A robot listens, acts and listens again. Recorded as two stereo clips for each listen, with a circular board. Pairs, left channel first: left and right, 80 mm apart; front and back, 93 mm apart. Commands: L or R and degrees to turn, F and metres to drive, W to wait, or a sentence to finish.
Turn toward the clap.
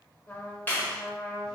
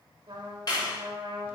L30
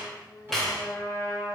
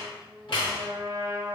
Found it: a clap, straight ahead.